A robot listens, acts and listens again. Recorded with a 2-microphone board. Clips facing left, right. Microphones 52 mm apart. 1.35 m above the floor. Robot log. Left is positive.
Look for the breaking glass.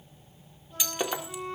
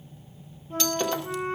cmd yaw +30
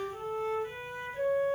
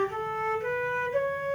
cmd idle
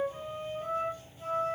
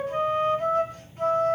end: I heard breaking glass, but can't make it out now. It was about 20° right or 140° left.